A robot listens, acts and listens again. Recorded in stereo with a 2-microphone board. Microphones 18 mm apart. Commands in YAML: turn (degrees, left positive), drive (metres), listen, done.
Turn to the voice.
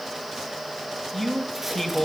turn: 30
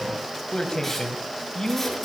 turn: 130
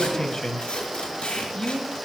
turn: 40
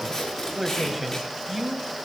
done: "Facing the man speaking, 2 to 4 m away."